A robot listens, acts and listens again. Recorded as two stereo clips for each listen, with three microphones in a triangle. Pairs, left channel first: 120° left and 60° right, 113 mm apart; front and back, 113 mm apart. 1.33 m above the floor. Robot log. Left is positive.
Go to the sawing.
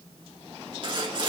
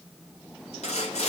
note: The sawing: 15° right.
cmd yaw -15
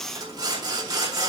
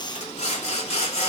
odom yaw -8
cmd fwd 1.0
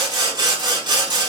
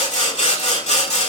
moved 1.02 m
note: The sawing is now 10° right.
cmd yaw -10
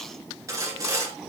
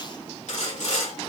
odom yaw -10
cmd fwd 1.0
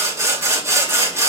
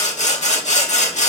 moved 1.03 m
cmd fwd 1.0
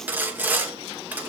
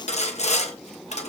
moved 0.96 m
note: The sawing is now 15° left.
cmd yaw +15
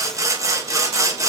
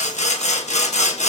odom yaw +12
cmd fwd 1.0
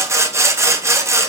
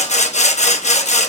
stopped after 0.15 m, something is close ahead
end: I am next to the sawing.